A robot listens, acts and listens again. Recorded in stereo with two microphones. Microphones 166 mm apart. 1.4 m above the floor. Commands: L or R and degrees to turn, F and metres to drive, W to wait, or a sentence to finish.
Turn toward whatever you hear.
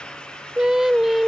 L30
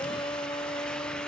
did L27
L145
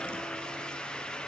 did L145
W
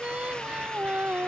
R10
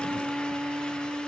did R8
Found it: singing, straight ahead.